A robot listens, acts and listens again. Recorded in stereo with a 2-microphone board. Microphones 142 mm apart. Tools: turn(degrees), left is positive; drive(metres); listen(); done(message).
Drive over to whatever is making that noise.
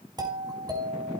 turn(degrees=-30)
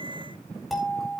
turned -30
drive(metres=1.0)
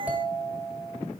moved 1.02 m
turn(degrees=-10)
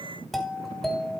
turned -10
drive(metres=1.0)
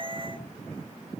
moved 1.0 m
listen()
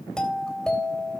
drive(metres=1.0)
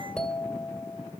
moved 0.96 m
turn(degrees=10)
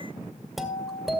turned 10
drive(metres=1.0)
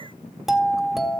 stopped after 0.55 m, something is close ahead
done("Arrived at the doorbell, straight ahead.")